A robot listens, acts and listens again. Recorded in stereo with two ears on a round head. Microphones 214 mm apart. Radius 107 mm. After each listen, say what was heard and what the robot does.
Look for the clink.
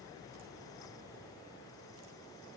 Keep listening.
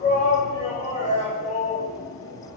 Keep listening.
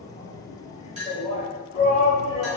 The clink: about 30° right or 150° right. Turn 30° right.
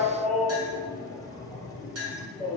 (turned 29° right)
So it is at 125° right. Turn 125° right.
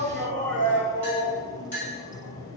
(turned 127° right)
Facing the clink.